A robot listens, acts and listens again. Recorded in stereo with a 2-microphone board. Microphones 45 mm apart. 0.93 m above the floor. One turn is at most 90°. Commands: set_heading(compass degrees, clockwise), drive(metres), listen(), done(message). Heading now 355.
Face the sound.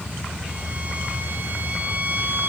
set_heading(35)
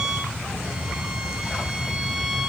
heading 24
set_heading(39)
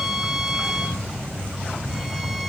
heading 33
done("Found it: a violin, straight ahead.")